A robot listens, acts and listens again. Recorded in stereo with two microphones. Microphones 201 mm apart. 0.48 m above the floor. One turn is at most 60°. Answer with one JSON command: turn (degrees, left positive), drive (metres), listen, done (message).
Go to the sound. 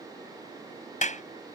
{"turn": 40}
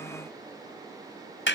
{"turn": 60}
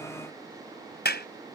{"turn": 60}
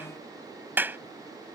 {"turn": -10}
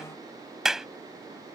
{"drive": 1.0}
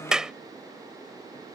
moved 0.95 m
{"drive": 1.0}
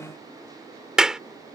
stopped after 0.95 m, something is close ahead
{"done": "I am next to the clap."}